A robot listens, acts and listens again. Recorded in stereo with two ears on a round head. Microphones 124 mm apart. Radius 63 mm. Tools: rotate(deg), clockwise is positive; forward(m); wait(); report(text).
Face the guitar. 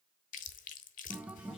rotate(30)
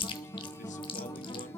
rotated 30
rotate(-20)
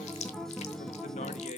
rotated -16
report("Found it: a guitar, straight ahead, under 1 m away.")